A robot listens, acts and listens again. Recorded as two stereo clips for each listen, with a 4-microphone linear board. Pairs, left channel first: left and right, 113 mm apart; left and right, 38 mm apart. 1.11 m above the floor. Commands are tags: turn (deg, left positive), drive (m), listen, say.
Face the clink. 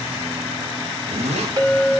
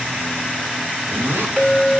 <turn deg="-35"/>
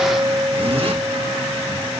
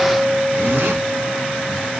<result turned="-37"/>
<turn deg="-105"/>
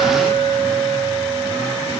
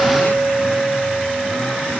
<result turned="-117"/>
<turn deg="10"/>
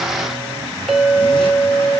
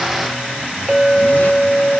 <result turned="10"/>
<say>Facing the clink, 2 to 4 m away.</say>